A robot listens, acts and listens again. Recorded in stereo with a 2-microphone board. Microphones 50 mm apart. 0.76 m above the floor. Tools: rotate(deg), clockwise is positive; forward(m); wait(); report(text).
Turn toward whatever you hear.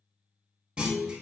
rotate(25)
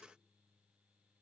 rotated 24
wait()
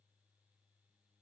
report("I heard a clunk, but can't make it out now. It was about straight ahead or 130° right.")